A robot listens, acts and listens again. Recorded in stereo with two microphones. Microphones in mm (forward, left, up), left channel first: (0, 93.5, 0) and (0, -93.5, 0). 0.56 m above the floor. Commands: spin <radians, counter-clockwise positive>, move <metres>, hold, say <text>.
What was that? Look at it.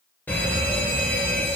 spin 0.52
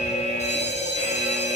spin 2.36
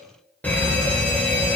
spin 0.17
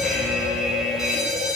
say Facing the fire alarm, 2 to 4 m away.